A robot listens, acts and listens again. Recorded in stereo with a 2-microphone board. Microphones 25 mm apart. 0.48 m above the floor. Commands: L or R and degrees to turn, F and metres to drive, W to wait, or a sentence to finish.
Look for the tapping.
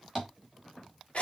L30
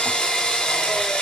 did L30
W
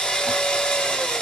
W
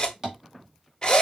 R20
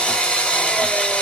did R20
W
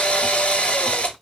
W
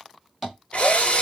Facing the tapping.